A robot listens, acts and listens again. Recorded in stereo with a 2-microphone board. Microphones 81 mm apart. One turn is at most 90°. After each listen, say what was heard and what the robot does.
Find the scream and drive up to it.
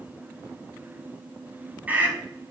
The scream: about 20° right or 160° right. Turn 20° right.
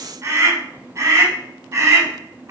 So it is at 140° right. Turn 90° right.
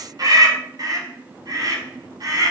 The scream is now 55° right. Turn 55° right.
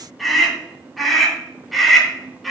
Drive 1.0 m forward.
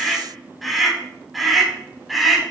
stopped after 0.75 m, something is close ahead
Something is in my way. I am facing the scream but have not reached it.